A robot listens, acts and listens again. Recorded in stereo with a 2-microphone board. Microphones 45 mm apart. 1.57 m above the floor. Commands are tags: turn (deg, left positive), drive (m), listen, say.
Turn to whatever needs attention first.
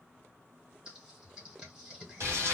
<listen/>
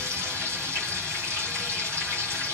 <listen/>
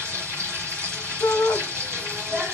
<turn deg="65"/>
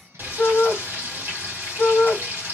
<turn deg="20"/>
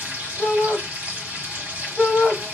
<say>Facing the shout.</say>